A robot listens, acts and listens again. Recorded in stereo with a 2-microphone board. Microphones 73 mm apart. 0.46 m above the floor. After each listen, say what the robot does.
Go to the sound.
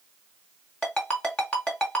Turn 15° left.
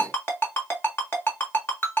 Turn 150° left.
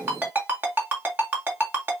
Turn 30° right.
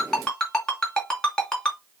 Turn 10° left.
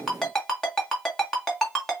Drive 1.0 m forward.
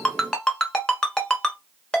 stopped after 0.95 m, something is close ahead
Turn 10° left.
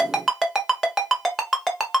Arrived at the ringtone, straight ahead.